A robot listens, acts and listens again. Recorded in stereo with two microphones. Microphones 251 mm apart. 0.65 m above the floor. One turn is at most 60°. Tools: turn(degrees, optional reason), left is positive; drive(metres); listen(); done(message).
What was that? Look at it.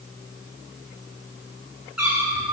turn(degrees=60, reason="The cat meowing: about 70° left or 110° left.")
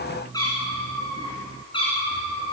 turn(degrees=20, reason="So it is at 20° left.")
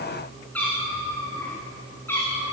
turn(degrees=10, reason="The cat meowing is now 10° left.")
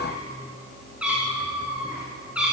done("Facing the cat meowing, over 4 m away.")